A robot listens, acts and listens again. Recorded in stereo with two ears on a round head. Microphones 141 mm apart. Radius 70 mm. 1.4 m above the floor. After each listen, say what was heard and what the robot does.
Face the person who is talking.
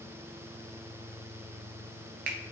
Keep listening.
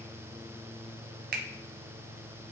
Keep listening.
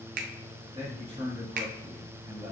The man speaking: about 40° right or 140° right. Turn 40° right.
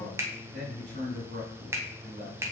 So it is at 100° right. Turn 100° right.
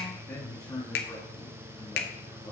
The man speaking is now 20° left. Turn 20° left.
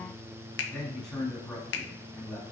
Facing the man speaking.